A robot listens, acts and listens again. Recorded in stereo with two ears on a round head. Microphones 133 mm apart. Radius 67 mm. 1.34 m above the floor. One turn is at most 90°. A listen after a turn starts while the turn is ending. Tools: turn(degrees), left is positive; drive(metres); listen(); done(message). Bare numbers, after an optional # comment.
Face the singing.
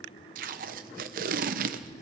listen()
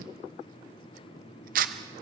listen()
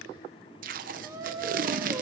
# The singing: about 25° right or 155° right.
turn(-25)
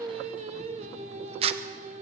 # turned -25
# So it is at 130° right.
turn(-90)
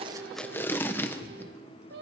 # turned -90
# The singing is now 75° right.
turn(-75)
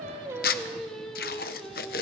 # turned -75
done("Found it: singing, straight ahead.")